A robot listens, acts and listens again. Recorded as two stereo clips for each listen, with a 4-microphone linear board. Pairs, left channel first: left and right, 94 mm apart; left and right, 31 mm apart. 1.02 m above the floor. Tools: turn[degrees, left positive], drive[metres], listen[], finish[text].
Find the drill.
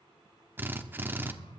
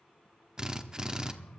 Thought: The drill: about 20° right or 160° right.
Action: turn[-20]
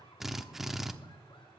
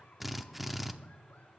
Action: finish[Found it: a drill, straight ahead, under 1 m away.]